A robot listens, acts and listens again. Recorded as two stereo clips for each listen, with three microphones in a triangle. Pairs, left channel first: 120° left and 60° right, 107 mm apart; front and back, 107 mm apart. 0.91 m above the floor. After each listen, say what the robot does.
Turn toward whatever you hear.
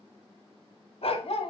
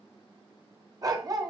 Turn 130° left.
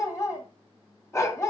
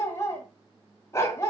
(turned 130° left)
Turn 60° left.
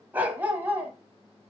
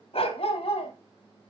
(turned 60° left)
Turn 10° left.
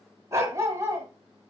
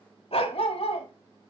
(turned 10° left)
Facing the dog barking.